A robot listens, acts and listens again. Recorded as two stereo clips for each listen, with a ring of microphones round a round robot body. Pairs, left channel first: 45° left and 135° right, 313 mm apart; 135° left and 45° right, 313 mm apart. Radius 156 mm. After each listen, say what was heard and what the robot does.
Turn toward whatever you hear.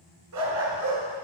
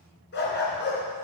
The dog barking: 165° right. Turn 165° right.
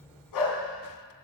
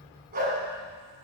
The dog barking is now 20° left. Turn 20° left.
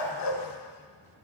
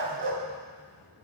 The dog barking is now 10° left. Turn 10° left.
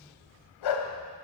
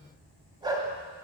The dog barking is now 35° left. Turn 35° left.
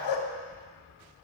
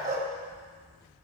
The dog barking is now 20° left. Turn 20° left.
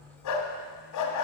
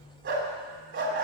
The dog barking is now 10° left. Turn 10° left.
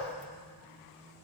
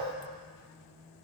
Keep listening.
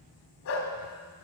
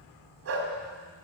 Facing the dog barking.